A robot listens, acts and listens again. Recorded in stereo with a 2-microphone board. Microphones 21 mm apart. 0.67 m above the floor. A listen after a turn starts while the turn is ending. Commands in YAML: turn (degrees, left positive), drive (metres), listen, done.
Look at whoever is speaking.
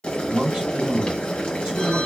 turn: -50
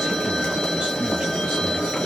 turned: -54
listen: true
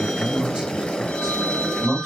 turn: -65
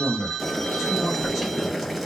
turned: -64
done: "Facing the man speaking."